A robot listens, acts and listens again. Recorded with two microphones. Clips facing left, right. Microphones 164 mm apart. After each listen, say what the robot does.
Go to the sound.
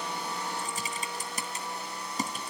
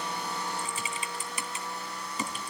Turn 40° left.
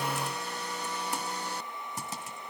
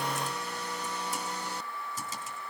Turn 100° left.
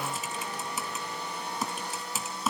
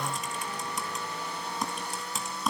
Drive 1.0 m forward.
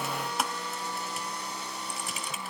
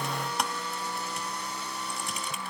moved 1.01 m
Drive 1.0 m forward.
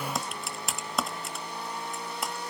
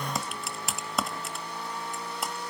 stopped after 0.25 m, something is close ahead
I am next to the typing on a keyboard.